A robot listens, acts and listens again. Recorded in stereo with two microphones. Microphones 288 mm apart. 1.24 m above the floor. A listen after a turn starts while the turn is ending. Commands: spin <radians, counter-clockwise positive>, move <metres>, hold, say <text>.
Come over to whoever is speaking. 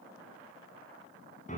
hold
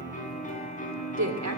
spin -1.31
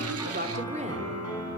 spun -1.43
spin -0.44
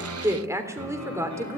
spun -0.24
spin -0.17
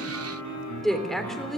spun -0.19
move 1.0
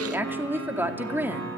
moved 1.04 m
move 1.0
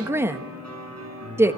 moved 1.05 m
spin -0.17
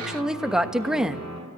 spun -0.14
move 1.0
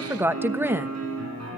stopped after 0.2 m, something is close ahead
say I am next to the woman speaking.